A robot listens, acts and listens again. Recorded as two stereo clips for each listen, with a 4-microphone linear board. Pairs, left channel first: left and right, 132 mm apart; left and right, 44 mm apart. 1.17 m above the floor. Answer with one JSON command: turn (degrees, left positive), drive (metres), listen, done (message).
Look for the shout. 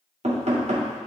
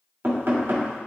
{"listen": true}
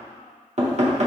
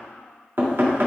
{"listen": true}
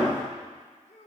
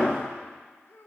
{"turn": 60}
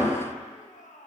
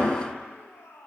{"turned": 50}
{"turn": 70}
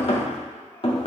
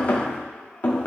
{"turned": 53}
{"turn": 15}
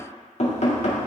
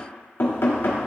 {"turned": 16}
{"listen": true}
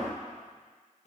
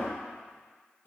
{"done": "I heard a shout from this way, but can't make it out now."}